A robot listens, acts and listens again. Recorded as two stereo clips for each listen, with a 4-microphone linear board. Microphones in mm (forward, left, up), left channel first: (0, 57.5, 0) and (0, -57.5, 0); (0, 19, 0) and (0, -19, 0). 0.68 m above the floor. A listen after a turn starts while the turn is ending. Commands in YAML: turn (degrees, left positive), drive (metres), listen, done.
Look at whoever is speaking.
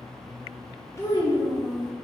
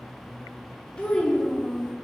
turn: 25
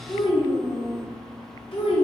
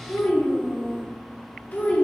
turn: 135
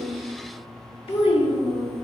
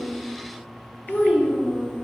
turn: 55
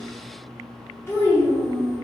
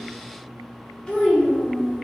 turn: 20
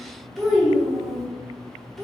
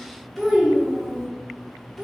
done: "Facing the child speaking."